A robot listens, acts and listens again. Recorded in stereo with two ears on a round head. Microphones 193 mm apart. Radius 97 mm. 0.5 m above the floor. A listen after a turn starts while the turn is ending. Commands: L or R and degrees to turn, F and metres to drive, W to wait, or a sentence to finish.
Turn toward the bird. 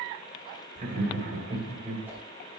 W
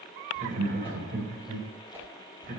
W
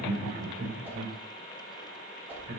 I can't make out a bird to turn to.